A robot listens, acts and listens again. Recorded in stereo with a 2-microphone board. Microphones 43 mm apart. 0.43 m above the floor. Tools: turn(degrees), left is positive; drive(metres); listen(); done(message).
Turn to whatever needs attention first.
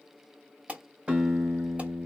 turn(degrees=-30)
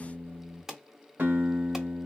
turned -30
done("Facing the alarm, 1 to 2 m away.")